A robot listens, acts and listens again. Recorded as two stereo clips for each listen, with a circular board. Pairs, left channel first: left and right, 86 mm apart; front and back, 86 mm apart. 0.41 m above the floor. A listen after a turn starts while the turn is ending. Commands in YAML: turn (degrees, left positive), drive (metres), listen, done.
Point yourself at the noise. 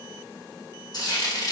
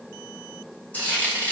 turn: 70
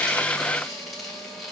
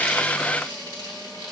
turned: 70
done: "Facing the frying."